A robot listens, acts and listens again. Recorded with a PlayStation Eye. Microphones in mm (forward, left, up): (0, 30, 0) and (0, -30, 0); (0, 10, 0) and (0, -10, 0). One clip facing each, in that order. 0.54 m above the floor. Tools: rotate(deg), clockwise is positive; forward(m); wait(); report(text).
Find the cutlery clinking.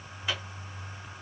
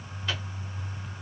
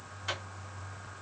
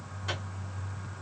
wait()
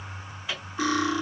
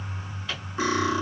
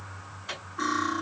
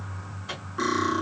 rotate(25)
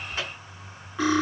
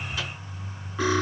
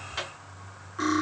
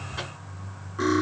report("Found it: cutlery clinking, straight ahead.")